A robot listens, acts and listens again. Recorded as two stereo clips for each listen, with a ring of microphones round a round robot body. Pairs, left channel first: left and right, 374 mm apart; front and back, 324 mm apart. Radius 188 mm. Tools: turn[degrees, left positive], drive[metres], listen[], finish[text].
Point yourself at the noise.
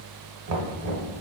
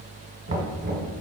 Thought: The knocking: 125° right.
Action: turn[-125]
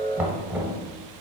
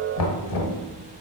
Action: finish[Facing the knocking, 1 to 2 m away.]